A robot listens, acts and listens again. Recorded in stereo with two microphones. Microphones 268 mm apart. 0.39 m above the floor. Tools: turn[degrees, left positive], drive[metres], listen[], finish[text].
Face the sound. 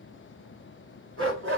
Thought: The dog barking: about 50° right or 130° right.
Action: turn[-50]
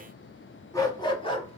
Thought: So it is at 20° left.
Action: turn[20]
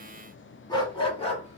Thought: The dog barking is now 25° left.
Action: turn[25]
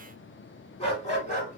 Thought: The dog barking is now 30° left.
Action: turn[30]
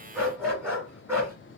Thought: The dog barking is now 10° right.
Action: turn[-10]
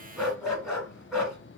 Action: finish[Facing the dog barking, 1 to 2 m away.]